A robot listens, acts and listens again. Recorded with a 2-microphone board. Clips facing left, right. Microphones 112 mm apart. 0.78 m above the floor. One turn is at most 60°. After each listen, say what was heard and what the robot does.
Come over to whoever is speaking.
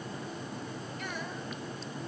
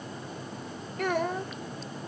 Turn 60° right.
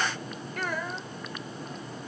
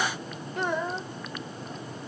So it is at 25° right. Turn 25° right.
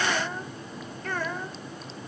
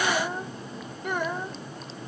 The child speaking is now 20° right. Turn 20° right.
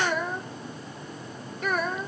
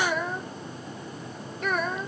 Drive 1.0 m forward.
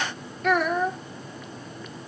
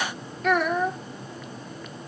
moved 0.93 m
Drive 1.0 m forward.
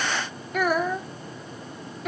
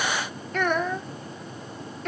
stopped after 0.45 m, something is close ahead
I am next to the child speaking.